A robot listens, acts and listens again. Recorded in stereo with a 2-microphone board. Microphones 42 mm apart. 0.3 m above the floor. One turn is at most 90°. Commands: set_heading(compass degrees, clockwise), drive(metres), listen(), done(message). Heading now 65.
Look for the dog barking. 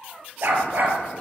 set_heading(115)
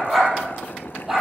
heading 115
set_heading(125)
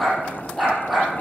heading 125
done("Found it: a dog barking, straight ahead.")